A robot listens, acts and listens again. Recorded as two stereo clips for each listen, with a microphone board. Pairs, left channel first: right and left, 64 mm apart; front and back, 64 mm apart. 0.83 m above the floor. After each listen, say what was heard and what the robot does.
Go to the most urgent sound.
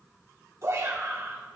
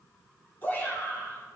The shout: 60° left. Turn 60° left.
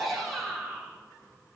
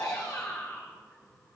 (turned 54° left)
Drive 1.0 m forward.
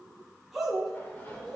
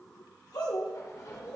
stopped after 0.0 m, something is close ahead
Blocked. The shout is further on, straight ahead.